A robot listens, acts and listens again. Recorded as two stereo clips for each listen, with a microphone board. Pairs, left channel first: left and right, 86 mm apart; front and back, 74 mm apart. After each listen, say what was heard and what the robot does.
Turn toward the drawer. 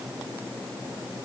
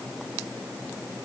Keep listening.
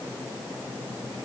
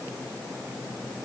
Keep listening.
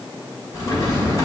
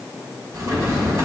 The drawer: 135° left. Turn 135° left.
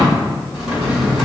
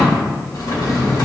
Found it: a drawer, straight ahead, 2 to 4 m away.